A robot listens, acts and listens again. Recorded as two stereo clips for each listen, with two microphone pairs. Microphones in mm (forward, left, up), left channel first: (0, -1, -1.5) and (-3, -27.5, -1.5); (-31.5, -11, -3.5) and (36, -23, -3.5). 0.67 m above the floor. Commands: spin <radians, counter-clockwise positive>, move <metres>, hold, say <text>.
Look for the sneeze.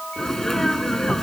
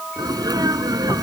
say Facing the sneeze.